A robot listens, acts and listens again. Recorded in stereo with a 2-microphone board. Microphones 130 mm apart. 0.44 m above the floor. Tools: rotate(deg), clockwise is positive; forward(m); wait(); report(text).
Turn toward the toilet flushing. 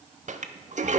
rotate(65)
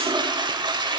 rotate(35)
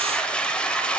rotate(-10)
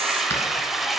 report("Facing the toilet flushing, under 1 m away.")